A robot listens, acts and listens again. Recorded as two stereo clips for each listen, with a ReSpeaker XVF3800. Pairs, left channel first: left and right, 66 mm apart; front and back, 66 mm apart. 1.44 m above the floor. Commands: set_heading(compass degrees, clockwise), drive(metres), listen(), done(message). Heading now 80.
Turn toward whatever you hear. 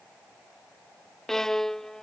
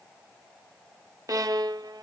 set_heading(270)
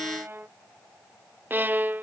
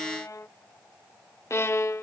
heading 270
set_heading(305)
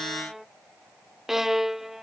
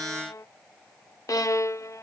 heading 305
done("Found it: a violin, straight ahead.")